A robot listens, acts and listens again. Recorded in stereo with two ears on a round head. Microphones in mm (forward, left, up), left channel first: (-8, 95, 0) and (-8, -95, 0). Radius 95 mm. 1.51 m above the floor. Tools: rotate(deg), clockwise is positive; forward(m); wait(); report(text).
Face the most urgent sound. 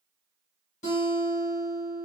wait()
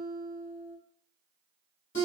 wait()
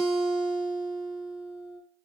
report("I can't make out anything urgent to turn to.")